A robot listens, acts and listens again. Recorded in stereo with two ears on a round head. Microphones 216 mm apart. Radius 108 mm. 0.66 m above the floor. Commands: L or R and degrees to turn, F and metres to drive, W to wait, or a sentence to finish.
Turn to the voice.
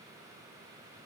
W
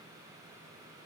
W
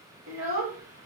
R60
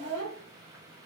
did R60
R25
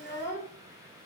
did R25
Facing the child speaking.